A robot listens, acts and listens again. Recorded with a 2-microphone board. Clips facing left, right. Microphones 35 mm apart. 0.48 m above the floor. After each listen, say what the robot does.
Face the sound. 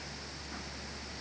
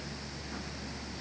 Keep listening.
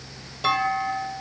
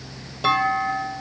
Turn 30° right.
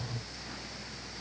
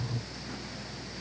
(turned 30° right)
Keep listening.
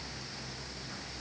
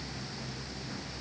I heard a clunk, but can't make it out now. It was about 25° left or 145° right.